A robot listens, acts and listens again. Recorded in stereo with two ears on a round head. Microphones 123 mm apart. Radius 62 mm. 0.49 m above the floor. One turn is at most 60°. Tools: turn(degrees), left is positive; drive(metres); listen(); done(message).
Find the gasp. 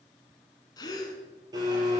turn(degrees=30)
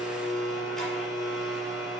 listen()
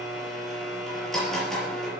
done("I heard a gasp, but can't make it out now. It was about straight ahead or 120° left.")